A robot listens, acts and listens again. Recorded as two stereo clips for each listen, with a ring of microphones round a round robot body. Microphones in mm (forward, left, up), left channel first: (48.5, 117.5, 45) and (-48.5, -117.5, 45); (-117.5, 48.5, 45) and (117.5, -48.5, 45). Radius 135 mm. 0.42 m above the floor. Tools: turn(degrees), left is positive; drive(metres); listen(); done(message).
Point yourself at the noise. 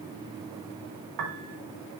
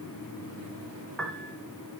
turn(degrees=-115)
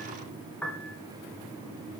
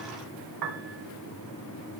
turn(degrees=-15)
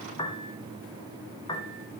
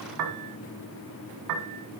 done("Found it: a piano, straight ahead, 1 to 2 m away.")